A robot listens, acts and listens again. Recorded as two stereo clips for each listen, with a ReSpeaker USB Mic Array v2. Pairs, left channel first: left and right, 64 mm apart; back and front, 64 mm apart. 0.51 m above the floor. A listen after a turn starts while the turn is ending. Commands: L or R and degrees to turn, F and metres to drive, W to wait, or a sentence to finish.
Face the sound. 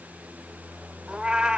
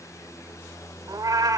R15
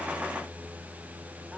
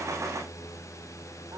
W
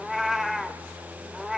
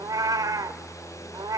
Found it: a cat meowing, straight ahead.